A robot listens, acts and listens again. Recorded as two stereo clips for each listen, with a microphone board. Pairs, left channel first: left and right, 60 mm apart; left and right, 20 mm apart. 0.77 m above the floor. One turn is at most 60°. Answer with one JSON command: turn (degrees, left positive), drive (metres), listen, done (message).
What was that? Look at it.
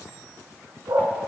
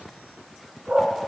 {"turn": -60}
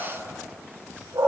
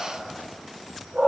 {"turn": -60}
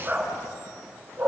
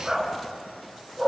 {"turn": -20}
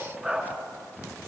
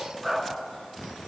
{"done": "Facing the dog barking, 2 to 4 m away."}